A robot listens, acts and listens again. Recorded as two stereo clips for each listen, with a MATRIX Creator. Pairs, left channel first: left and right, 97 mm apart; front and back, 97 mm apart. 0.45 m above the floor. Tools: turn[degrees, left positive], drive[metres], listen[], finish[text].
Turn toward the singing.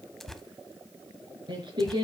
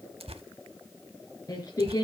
Thought: The singing: 50° right.
Action: turn[-50]
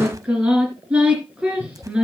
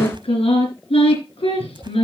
Thought: The singing is now 10° right.
Action: turn[-10]
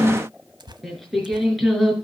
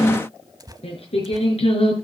Action: finish[Facing the singing, over 4 m away.]